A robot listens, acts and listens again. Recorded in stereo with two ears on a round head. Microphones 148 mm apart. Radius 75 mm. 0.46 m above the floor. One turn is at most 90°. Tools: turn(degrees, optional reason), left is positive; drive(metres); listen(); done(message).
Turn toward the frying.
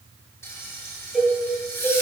turn(degrees=15, reason="The frying: about 15° left or 165° left.")
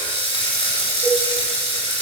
turn(degrees=90, reason="So it is at 145° left.")
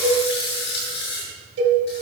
turn(degrees=70, reason="The frying is now 70° left.")
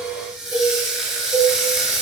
done("Found it: frying, straight ahead.")